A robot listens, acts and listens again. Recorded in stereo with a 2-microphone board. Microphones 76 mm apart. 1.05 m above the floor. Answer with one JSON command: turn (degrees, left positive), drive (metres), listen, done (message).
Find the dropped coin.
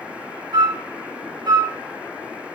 {"listen": true}
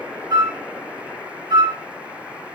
{"listen": true}
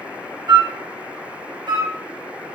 {"done": "I can't make out a dropped coin, only a flute."}